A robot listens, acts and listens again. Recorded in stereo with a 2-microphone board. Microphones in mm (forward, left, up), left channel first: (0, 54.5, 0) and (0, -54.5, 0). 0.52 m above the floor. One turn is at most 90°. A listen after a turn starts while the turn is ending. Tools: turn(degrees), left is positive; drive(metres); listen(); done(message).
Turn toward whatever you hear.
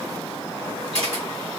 turn(degrees=-70)
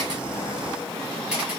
listen()
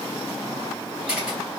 turn(degrees=-10)
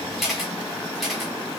done("Found it: a camera shutter, straight ahead.")